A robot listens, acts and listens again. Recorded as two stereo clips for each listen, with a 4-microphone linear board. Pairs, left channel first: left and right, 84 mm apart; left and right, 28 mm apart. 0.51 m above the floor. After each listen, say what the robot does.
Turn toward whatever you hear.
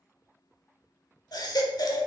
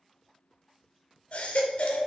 Turn 55° left.
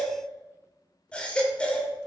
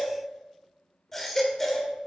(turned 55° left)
Turn 15° left.
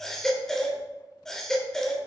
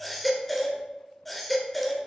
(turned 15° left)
Facing the baby crying.